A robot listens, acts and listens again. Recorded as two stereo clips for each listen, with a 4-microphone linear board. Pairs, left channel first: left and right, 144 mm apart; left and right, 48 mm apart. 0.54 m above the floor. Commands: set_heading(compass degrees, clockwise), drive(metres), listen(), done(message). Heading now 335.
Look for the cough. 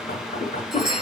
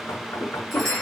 set_heading(280)
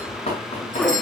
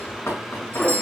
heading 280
done("Found it: a cough, straight ahead.")